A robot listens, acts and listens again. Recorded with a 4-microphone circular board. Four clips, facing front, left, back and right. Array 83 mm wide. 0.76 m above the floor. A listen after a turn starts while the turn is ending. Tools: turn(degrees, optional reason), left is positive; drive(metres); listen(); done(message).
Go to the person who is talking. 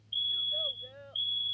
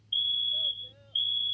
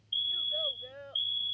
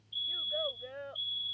turn(degrees=-100, reason="The child speaking: 100° right.")
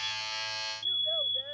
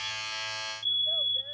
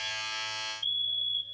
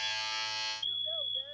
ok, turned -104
listen()
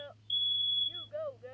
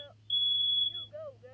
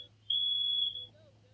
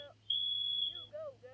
drive(metres=1.0)
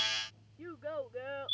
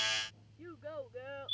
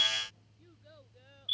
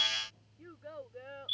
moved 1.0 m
drive(metres=1.0)
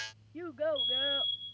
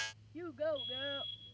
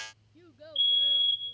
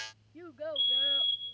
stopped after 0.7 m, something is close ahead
done("I am next to the child speaking.")